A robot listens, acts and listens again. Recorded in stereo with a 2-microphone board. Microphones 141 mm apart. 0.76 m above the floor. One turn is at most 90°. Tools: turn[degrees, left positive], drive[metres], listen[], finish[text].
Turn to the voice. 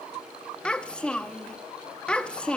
Action: turn[30]
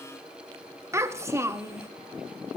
Thought: So it is at 20° right.
Action: turn[-20]
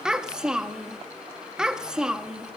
Action: finish[Facing the child speaking, under 1 m away.]